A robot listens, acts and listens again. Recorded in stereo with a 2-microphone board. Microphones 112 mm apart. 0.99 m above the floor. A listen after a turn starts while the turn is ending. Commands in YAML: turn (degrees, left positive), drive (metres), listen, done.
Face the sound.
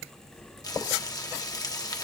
turn: 35
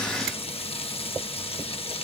turn: 110
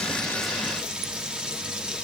turn: -10
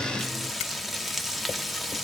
done: "Facing the frying, under 1 m away."